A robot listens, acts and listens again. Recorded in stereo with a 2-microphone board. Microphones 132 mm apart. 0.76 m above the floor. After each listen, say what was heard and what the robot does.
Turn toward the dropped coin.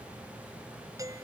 Keep listening.
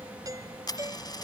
The dropped coin: about 30° left or 150° left. Turn 30° left.
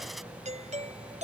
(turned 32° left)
Keep listening.
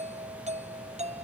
I heard a dropped coin, but can't make it out now. It was about straight ahead or 115° left.